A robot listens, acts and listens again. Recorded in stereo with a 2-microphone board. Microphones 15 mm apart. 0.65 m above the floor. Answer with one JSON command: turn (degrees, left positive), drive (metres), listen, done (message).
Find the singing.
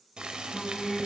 {"turn": 25}
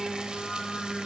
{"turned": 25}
{"turn": 135}
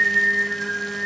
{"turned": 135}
{"turn": 40}
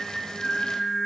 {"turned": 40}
{"done": "Facing the singing."}